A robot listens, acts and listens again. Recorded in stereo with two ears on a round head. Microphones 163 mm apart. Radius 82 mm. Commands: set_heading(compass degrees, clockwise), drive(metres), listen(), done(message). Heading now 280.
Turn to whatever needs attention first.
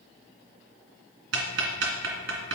listen()
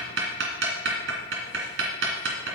listen()
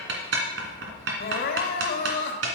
set_heading(225)
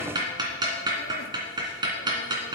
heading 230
listen()
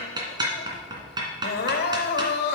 set_heading(165)
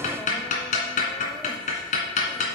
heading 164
listen()
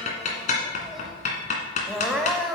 done("Facing the crying.")